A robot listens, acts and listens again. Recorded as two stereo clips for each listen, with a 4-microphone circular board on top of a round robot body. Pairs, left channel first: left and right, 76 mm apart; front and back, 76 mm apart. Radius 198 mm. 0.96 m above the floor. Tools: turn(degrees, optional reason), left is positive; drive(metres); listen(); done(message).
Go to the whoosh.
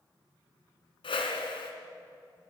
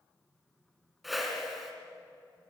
turn(degrees=95, reason="The whoosh: 95° left.")
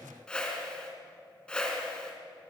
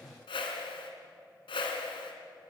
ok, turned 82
turn(degrees=10, reason="The whoosh is now 10° left.")
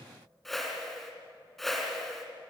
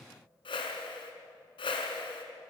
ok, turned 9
drive(metres=1.0)
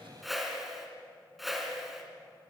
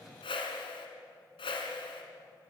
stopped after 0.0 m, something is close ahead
done("Something is in my way. I am facing the whoosh but have not reached it.")